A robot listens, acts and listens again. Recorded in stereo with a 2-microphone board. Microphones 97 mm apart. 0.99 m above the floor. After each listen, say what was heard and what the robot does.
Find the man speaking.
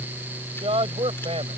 Turn 90° right.
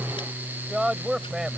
Facing the man speaking.